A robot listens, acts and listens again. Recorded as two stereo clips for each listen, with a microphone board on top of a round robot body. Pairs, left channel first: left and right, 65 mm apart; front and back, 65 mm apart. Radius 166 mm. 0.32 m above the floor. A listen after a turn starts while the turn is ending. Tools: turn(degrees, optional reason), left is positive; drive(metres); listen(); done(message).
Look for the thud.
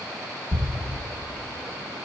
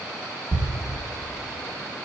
turn(degrees=-165, reason="The thud: 165° right.")
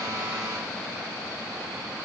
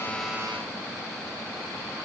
done("Facing where the thud came from. I can't hear it now.")